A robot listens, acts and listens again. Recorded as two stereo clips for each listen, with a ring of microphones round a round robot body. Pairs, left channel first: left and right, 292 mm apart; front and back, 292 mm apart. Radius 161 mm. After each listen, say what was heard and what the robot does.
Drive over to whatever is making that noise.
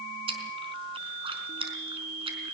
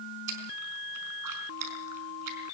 The chewing: 160° right. Turn 160° right.
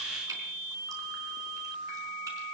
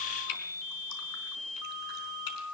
Keep listening.
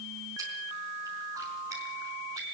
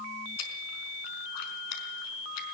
Keep listening.
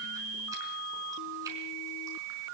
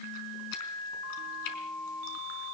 Facing where the chewing came from. I can't hear it now. I did not reach it.